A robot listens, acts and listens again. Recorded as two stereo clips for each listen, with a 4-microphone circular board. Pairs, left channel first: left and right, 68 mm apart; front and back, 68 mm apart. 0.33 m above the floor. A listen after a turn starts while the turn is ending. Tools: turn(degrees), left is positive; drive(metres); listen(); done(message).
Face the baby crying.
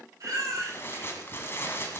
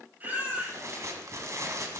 turn(degrees=-120)
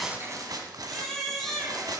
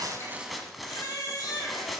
done("Facing the baby crying, over 4 m away.")